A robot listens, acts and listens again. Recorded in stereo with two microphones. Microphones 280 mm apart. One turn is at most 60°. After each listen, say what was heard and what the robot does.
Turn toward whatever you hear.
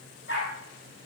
The dog barking: about 40° left or 140° left. Turn 40° left.
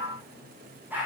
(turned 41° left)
Found it: a dog barking, straight ahead, over 4 m away.